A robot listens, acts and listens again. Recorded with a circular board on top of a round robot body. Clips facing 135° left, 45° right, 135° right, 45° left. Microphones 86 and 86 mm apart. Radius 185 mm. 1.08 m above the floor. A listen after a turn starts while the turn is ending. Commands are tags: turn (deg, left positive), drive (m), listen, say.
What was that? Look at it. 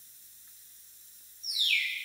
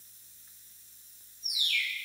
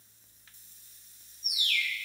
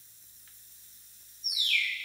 <turn deg="-110"/>
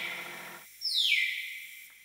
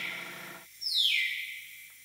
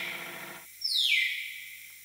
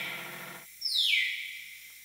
<say>Facing the bird, 2 to 4 m away.</say>